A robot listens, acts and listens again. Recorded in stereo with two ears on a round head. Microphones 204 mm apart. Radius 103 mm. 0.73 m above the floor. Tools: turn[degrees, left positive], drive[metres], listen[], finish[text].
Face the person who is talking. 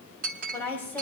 Action: turn[30]
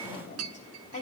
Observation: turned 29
Thought: So it is at 140° left.
Action: turn[140]
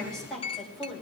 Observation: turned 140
Action: finish[Found it: a woman speaking, straight ahead, over 4 m away.]